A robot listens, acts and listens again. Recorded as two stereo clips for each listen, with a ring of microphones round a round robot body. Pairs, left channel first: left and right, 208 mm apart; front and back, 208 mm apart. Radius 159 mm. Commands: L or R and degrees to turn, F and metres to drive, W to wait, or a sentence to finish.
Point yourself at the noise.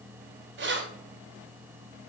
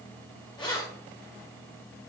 R75
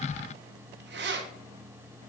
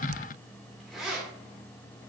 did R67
R95
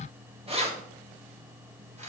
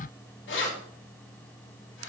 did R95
R35
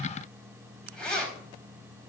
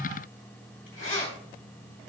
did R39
Found it: keys jangling, straight ahead, 2 to 4 m away.